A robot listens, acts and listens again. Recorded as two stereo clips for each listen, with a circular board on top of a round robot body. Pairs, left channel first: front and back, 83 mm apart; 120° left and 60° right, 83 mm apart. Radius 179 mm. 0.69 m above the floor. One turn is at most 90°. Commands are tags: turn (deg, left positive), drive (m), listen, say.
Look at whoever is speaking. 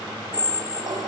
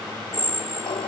<listen/>
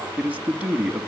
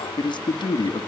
<turn deg="90"/>
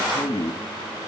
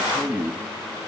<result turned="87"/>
<turn deg="20"/>
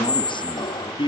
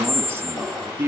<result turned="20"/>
<say>Facing the man speaking.</say>